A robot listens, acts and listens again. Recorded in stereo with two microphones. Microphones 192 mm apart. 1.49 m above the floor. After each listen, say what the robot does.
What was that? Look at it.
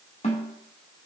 Turn 35° left.
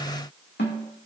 Turn 115° left.
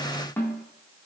Turn 10° left.
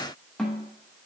Found it: a snare drum, straight ahead, 2 to 4 m away.